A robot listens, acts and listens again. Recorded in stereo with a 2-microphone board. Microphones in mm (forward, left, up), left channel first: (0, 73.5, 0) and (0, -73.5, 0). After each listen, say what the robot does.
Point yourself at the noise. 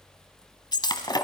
Turn 30° left.
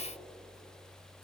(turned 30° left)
Keep listening.
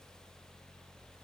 I heard breaking glass, but can't make it out now. It was about straight ahead or 120° left.